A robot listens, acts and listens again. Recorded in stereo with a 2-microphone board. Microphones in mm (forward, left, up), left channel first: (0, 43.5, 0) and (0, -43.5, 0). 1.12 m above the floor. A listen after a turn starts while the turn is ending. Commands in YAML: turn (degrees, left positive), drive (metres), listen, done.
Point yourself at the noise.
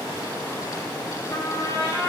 turn: 35
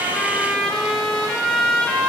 turn: 10
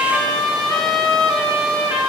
done: "Facing the trumpet."